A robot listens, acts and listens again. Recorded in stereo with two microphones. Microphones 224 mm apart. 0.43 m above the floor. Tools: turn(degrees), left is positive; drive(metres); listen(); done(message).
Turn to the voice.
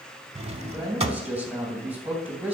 turn(degrees=-30)
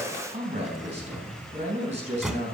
turn(degrees=-145)
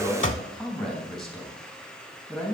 done("Found it: a man speaking, straight ahead.")